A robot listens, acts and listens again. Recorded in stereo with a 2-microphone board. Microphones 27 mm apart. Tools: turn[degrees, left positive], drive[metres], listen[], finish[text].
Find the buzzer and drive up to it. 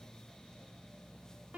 Action: listen[]
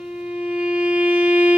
Action: listen[]
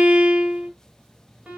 Action: finish[I can't make out a buzzer, only a violin.]